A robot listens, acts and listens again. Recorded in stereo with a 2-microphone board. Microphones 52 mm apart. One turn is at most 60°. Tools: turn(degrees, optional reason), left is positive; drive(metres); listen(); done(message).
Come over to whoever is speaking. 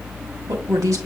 turn(degrees=-60, reason="The woman speaking: about 75° right or 105° right.")
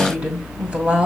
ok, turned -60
turn(degrees=-20, reason="So it is at 20° right.")
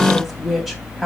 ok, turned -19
drive(metres=1.0)
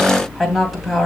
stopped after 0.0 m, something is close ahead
done("Something is in my way. I am facing the woman speaking but have not reached it.")